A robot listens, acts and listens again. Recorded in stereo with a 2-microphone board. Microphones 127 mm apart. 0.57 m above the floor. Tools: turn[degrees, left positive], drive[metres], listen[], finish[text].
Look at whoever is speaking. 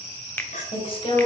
Thought: The woman speaking: about 45° left or 135° left.
Action: turn[45]
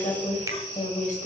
Thought: So it is at 90° left.
Action: turn[90]
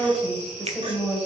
Action: finish[Found it: a woman speaking, straight ahead, 2 to 4 m away.]